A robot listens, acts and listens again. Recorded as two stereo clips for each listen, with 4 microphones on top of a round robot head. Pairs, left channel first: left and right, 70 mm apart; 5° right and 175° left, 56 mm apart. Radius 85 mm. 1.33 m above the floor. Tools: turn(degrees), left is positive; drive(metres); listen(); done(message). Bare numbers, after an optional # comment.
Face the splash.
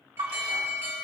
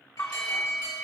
# The splash: 65° right.
turn(-65)
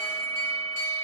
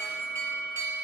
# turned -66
done("I heard a splash from this way, but can't make it out now.")